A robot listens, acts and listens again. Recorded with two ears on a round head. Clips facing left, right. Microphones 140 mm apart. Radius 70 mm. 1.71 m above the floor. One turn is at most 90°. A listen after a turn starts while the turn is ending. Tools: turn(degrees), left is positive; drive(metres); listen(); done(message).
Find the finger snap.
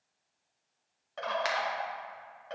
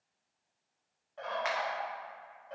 turn(degrees=40)
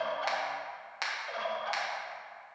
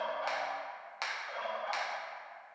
done("Found it: a finger snap, straight ahead.")